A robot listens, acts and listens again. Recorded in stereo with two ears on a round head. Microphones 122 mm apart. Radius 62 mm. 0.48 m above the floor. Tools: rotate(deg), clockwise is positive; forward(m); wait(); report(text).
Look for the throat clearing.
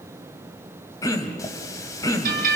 rotate(-25)
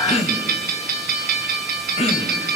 rotate(-130)
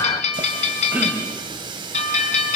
rotate(10)
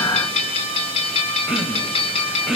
report("Found it: throat clearing, straight ahead.")